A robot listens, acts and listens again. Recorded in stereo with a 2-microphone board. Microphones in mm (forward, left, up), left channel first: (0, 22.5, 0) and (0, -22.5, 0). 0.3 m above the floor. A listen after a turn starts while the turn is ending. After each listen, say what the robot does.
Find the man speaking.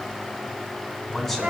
Turn 30° left.
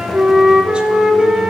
Keep listening.
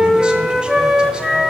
Keep listening.
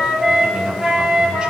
I heard a man speaking, but can't make it out now. It was about 20° right or 140° left.